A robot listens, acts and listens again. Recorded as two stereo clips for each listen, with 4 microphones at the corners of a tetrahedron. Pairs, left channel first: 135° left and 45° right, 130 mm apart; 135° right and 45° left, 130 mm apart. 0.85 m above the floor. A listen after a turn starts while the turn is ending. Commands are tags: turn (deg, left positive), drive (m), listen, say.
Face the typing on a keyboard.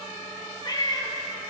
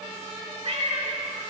<listen/>
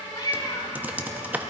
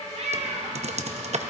<turn deg="30"/>
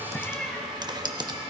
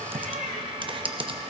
<say>Found it: typing on a keyboard, straight ahead, under 1 m away.</say>